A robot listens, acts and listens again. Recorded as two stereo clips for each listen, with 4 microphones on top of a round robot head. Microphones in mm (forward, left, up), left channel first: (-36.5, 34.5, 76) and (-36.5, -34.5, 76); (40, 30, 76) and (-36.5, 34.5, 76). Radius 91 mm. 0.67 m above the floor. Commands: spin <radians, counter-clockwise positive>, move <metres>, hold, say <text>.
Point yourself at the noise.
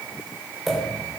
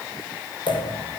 say Found it: a pop, straight ahead, 2 to 4 m away.